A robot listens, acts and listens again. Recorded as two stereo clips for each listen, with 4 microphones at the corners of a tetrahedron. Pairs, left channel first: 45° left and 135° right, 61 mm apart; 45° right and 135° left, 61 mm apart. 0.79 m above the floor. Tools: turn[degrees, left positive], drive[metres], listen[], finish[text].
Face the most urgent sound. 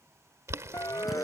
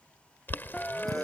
Thought: The siren: 25° left.
Action: turn[25]
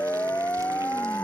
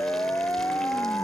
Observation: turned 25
Action: finish[Facing the siren.]